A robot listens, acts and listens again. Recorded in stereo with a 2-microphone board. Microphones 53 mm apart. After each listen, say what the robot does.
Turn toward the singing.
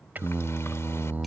Turn 40° right.
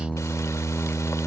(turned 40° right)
Found it: singing, straight ahead.